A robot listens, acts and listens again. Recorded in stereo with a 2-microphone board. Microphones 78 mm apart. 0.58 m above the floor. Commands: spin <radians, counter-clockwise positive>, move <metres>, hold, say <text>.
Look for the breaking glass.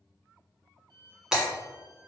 spin -0.52
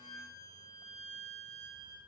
hold
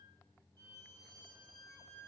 say I heard breaking glass, but can't make it out now. It was about 20° left or 140° right.